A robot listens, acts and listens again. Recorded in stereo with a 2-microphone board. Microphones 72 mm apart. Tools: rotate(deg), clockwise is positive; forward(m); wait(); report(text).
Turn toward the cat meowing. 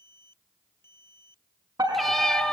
rotate(-30)
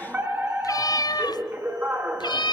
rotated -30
rotate(-100)
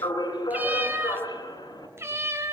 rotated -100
rotate(35)
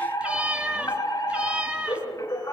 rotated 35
rotate(15)
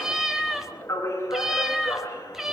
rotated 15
report("Found it: a cat meowing, straight ahead.")